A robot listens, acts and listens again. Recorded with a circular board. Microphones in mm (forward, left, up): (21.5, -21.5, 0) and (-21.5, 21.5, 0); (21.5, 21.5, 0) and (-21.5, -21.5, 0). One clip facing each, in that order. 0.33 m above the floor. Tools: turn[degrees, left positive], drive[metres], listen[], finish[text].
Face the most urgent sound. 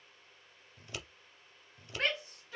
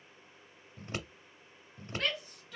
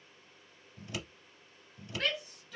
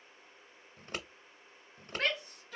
Thought: The shout: 100° right.
Action: turn[-100]
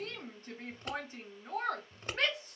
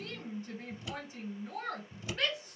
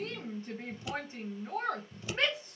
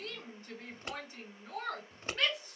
Thought: The shout is now 10° right.
Action: turn[-10]
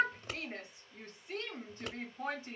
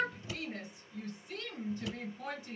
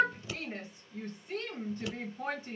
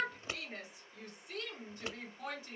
Action: finish[Facing the shout, 1 to 2 m away.]